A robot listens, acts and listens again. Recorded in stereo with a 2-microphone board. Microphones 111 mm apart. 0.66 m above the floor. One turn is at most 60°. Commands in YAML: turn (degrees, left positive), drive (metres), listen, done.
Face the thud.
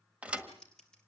turn: -30
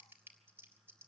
listen: true
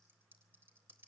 done: "I heard a thud, but can't make it out now. It was about 15° left or 135° right."